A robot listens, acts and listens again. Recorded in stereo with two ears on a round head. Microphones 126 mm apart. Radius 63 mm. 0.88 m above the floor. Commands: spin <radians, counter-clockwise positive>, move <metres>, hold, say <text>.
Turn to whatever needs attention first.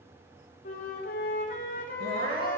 spin -1.13
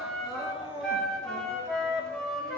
say Facing the crying, 2 to 4 m away.